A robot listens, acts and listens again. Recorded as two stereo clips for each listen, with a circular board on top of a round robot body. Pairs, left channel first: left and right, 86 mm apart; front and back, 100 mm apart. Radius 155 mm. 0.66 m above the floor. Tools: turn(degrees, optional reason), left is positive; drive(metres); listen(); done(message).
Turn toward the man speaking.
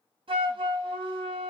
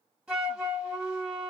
listen()
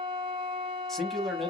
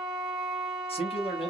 done("Found it: a man speaking, straight ahead.")